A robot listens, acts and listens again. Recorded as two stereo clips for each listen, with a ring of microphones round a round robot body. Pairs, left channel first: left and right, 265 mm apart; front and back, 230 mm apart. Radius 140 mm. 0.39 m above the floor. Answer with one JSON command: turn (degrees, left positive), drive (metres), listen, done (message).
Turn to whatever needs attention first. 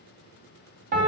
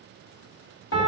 {"listen": true}
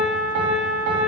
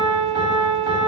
{"listen": true}
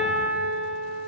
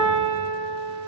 {"done": "I can't make out anything urgent to turn to."}